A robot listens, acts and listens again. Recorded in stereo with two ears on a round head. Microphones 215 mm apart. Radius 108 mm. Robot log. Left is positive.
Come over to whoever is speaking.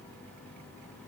cmd idle
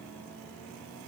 cmd idle
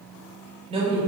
note: The woman speaking: about 25° right or 155° right.
cmd yaw -25
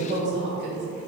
note: So it is at 130° right.
cmd yaw -130
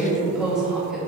cmd fwd 1.0
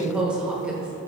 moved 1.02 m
cmd fwd 1.0
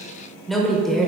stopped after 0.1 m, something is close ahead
end: Arrived at the woman speaking, straight ahead.